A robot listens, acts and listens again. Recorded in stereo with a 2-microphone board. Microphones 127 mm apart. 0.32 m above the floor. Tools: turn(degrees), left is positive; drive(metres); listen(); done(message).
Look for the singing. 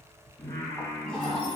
turn(degrees=25)
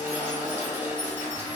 listen()
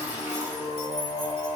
turn(degrees=130)
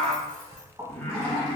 turn(degrees=10)
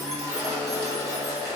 listen()
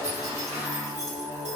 done("Facing the singing.")